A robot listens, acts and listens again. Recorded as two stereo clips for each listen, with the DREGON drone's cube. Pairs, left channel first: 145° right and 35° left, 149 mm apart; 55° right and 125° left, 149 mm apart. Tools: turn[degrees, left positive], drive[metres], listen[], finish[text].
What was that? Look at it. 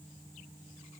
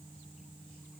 Action: listen[]
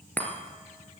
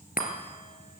Thought: The chime: 65° right.
Action: turn[-65]
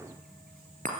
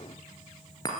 Action: finish[Facing the chime.]